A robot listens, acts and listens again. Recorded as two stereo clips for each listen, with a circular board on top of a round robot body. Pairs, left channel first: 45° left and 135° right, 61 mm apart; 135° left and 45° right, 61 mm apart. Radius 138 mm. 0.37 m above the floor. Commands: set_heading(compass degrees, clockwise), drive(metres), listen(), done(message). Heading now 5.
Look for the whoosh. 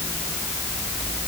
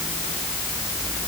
listen()
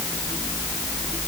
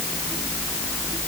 listen()
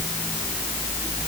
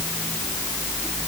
done("I can't make out a whoosh.")